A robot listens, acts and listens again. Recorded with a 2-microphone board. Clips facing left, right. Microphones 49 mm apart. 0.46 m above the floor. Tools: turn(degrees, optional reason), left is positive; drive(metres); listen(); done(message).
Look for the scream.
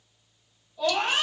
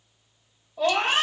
turn(degrees=-60, reason="The scream: about 60° right or 120° right.")
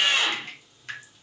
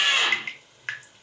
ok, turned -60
turn(degrees=-30, reason="So it is at 30° right.")
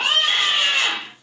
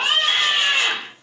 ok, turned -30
turn(degrees=-10, reason="The scream is now 10° right.")
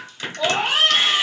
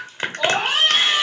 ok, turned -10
done("Found it: a scream, straight ahead.")